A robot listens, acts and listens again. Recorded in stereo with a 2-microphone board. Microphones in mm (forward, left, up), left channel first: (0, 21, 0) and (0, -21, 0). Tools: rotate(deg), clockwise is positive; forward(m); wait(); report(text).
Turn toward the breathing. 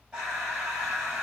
rotate(30)
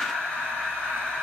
rotate(-20)
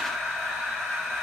report("Facing the breathing.")